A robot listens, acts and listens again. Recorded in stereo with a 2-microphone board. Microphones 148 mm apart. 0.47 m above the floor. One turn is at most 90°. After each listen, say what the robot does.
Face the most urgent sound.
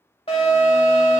Turn 40° left.
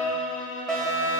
Facing the alarm.